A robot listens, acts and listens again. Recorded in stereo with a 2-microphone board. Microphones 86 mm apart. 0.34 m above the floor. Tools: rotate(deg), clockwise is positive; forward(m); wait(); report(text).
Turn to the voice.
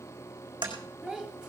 rotate(30)
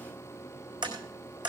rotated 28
wait()
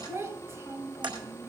rotate(140)
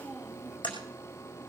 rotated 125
rotate(15)
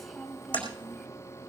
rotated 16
report("Found it: a child speaking, straight ahead.")